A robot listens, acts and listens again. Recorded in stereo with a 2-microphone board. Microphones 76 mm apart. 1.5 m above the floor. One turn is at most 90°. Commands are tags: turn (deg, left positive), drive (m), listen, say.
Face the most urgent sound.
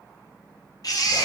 <turn deg="55"/>
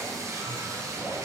<listen/>
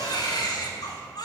<turn deg="65"/>
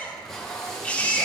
<turn deg="20"/>
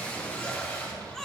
<say>Found it: a baby crying, straight ahead, 1 to 2 m away.</say>